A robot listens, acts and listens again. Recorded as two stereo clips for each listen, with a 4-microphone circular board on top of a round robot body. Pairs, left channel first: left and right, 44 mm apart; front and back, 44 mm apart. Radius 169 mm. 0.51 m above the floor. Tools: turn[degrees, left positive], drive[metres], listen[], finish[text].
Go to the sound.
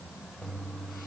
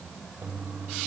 Thought: The toilet flushing: 155° left.
Action: turn[155]
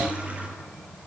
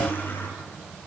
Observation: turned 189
Thought: The toilet flushing is now 35° right.
Action: turn[-35]
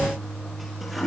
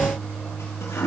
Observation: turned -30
Action: drive[1.0]
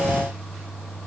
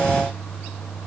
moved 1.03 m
Thought: The toilet flushing is now 10° right.
Action: turn[-10]
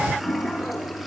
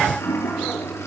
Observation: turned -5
Action: drive[1.0]
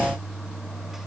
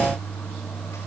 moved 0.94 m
Thought: The toilet flushing is now 10° right.
Action: turn[-10]
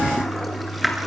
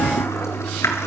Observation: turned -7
Action: drive[1.0]
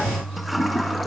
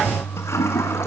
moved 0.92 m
Action: drive[1.0]
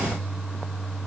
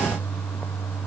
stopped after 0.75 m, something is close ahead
Action: finish[Arrived at the toilet flushing, straight ahead.]